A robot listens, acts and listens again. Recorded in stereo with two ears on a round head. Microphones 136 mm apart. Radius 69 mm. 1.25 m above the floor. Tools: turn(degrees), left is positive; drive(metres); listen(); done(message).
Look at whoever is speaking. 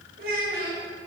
turn(degrees=-70)
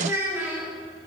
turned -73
turn(degrees=-10)
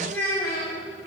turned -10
turn(degrees=20)
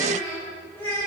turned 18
turn(degrees=15)
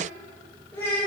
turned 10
turn(degrees=15)
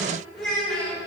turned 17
done("Facing the child speaking.")